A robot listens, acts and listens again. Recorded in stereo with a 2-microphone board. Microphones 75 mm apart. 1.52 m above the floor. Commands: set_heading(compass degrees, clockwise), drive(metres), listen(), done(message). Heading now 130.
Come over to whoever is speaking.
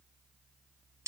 listen()
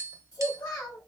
set_heading(75)
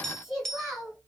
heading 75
drive(1.0)
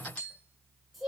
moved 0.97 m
drive(1.0)
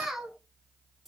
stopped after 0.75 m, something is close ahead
done("Arrived at the child speaking, straight ahead.")